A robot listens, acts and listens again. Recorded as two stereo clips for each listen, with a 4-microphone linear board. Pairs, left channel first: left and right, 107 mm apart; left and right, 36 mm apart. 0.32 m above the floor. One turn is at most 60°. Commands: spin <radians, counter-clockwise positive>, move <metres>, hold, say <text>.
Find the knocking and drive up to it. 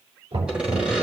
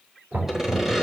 spin -1.05
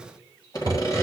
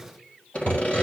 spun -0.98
spin -0.52
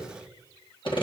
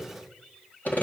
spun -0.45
hold
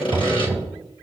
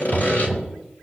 move 1.0
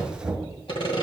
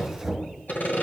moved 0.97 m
move 1.0
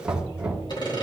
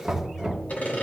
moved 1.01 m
spin -0.17
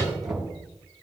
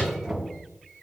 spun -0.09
move 1.0
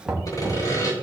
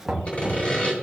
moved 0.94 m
move 1.0
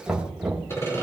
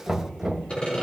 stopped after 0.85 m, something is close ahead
spin -0.17
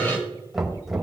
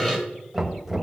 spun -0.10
say I am next to the knocking.